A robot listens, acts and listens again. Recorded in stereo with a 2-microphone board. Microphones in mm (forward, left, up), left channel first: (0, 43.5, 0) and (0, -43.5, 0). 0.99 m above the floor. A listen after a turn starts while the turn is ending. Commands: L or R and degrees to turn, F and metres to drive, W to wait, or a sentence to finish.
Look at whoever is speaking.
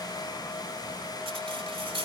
W
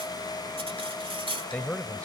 L30
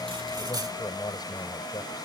L135
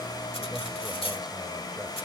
W
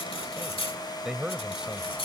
Facing the man speaking.